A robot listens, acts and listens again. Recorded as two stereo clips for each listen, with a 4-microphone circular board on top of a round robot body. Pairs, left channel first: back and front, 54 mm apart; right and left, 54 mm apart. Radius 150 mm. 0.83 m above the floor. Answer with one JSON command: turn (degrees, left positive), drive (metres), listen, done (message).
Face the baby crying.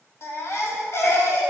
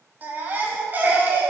{"turn": 145}
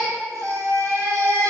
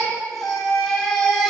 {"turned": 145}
{"done": "Found it: a baby crying, straight ahead."}